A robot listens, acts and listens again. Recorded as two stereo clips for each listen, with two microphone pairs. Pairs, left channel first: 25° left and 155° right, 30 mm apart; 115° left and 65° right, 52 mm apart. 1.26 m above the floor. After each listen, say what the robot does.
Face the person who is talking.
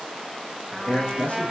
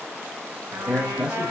Turn 10° left.
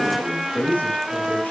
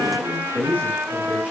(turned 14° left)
Found it: a man speaking, straight ahead.